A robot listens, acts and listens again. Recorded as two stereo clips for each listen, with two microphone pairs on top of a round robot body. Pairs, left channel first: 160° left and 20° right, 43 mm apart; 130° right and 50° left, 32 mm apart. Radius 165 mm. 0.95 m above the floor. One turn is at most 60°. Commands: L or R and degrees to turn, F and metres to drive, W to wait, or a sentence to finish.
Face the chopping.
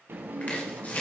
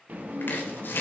R60
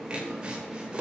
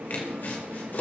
R60
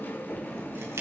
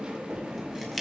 R45
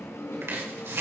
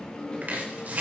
Facing the chopping.